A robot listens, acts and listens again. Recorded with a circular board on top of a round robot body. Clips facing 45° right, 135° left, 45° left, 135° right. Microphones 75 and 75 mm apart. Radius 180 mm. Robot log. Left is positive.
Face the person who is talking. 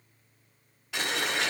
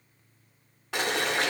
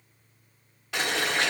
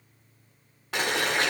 cmd idle
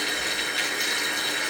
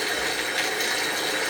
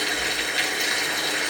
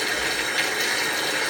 cmd idle
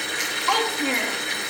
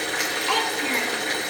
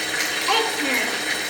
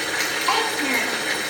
note: The child speaking: 70° right.
cmd yaw -70
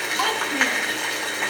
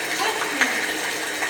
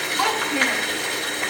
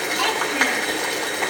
note: The child speaking is now 15° right.
cmd yaw -15
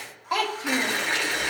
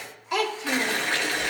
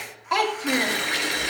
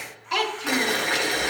end: Facing the child speaking.